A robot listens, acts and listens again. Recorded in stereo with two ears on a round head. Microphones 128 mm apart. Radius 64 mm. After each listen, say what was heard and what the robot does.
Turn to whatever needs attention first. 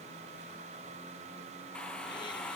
Keep listening.
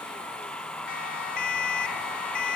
The siren: about 75° left or 105° left. Turn 75° left.
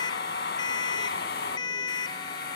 So it is at 30° left. Turn 30° left.
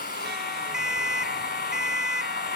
Facing the siren.